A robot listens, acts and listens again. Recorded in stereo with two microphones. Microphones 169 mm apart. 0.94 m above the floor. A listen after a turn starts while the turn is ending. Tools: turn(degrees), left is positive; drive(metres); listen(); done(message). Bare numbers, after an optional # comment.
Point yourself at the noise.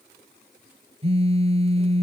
# The phone buzzing: about 35° right or 145° right.
turn(-35)
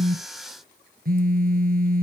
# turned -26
# So it is at 115° right.
turn(-115)
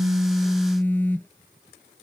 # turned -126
# The phone buzzing is now 10° left.
turn(10)
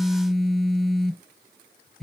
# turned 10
done("Found it: a phone buzzing, straight ahead.")